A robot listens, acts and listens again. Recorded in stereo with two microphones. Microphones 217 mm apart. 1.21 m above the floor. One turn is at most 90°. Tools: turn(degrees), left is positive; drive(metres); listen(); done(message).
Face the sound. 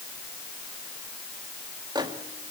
turn(degrees=-20)
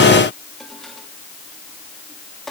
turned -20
listen()
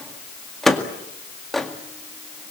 done("Facing the microwave, 1 to 2 m away.")